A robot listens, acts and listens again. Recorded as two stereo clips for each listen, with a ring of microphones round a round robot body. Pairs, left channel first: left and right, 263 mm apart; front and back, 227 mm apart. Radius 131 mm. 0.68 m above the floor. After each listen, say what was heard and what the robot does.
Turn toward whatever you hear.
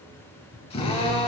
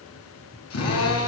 The drill: 20° left. Turn 20° left.
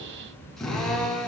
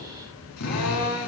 Facing the drill, over 4 m away.